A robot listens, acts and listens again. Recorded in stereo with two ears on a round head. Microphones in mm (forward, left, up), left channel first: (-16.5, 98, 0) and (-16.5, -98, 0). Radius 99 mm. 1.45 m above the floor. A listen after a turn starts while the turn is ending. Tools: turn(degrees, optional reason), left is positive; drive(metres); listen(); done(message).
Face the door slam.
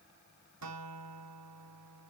listen()
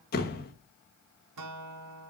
turn(degrees=40, reason="The door slam: about 40° left or 140° left.")
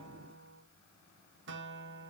listen()
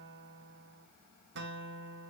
done("I heard a door slam, but can't make it out now. It was about straight ahead or 100° left.")